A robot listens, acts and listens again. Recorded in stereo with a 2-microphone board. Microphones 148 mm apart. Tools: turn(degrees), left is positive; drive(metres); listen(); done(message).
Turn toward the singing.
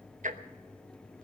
listen()
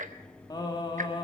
turn(degrees=35)
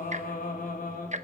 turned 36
turn(degrees=110)
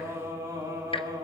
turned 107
turn(degrees=-25)
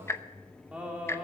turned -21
turn(degrees=-10)
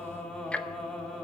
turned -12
done("Facing the singing, 2 to 4 m away.")